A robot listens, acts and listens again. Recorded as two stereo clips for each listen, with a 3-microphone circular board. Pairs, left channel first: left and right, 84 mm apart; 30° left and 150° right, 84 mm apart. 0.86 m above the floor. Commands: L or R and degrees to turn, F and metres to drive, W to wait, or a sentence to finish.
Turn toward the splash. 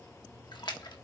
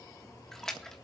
L115
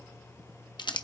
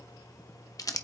Facing where the splash came from. I can't hear it now.